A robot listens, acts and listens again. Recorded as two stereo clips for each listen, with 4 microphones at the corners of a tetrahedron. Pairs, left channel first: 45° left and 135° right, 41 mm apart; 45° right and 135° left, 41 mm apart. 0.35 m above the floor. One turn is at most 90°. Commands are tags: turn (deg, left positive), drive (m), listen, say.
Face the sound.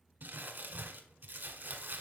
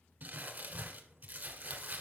<turn deg="-90"/>
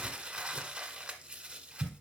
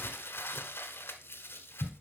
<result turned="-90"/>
<turn deg="-70"/>
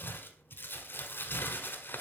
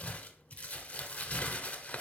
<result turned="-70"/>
<turn deg="10"/>
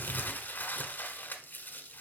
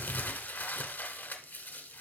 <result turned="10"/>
<say>Facing the crumpling, 1 to 2 m away.</say>